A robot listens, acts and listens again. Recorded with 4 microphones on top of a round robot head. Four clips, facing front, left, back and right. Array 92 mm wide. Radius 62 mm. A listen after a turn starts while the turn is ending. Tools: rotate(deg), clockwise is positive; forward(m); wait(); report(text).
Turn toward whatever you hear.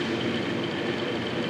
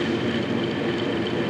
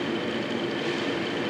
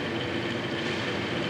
wait()
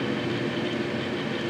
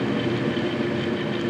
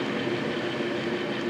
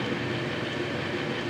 wait()
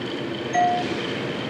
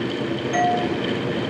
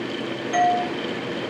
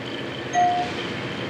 rotate(-145)
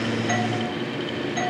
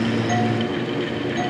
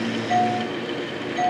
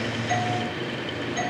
rotate(10)
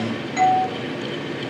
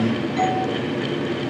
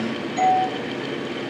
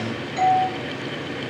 report("Facing the doorbell, 2 to 4 m away.")